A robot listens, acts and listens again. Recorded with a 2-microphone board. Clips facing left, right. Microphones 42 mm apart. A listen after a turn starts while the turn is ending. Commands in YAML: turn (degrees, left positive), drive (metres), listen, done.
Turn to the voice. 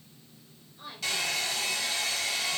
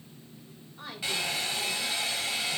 turn: -75
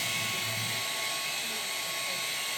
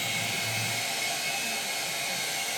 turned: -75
listen: true
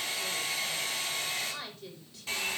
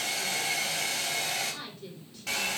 done: "Found it: a woman speaking, straight ahead, over 4 m away."